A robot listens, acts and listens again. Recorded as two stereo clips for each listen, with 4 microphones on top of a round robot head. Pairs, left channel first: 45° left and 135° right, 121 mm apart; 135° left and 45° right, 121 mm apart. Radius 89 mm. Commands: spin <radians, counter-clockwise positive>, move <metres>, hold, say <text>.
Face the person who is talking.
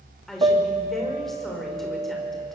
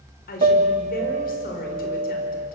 spin 2.36
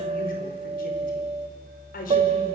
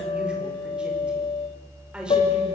spin 0.61
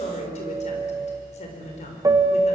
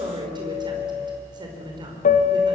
spin 0.17
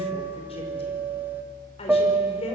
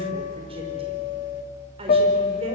say Found it: a woman speaking, straight ahead, over 4 m away.